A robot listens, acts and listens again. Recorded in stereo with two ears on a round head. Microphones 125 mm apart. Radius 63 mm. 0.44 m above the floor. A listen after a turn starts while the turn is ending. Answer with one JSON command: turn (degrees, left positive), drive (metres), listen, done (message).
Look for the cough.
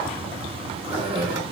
{"turn": -35}
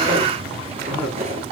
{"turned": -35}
{"done": "Facing the cough, over 4 m away."}